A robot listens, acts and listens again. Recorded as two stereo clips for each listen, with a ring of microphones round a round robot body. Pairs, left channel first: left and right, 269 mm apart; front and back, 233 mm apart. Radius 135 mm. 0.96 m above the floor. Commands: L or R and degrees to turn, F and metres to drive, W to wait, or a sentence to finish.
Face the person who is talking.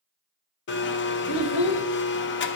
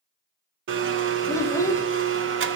L80
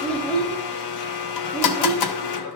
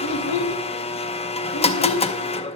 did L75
Facing the child speaking.